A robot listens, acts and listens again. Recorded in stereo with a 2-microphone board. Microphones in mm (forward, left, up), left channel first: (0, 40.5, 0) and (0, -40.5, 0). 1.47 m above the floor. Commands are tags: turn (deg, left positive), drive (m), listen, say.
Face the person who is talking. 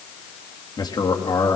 <turn deg="60"/>
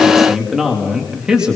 <turn deg="-10"/>
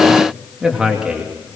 <turn deg="-10"/>
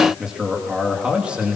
<turn deg="-10"/>
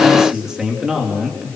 <turn deg="-10"/>
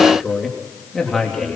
<say>Facing the man speaking, 2 to 4 m away.</say>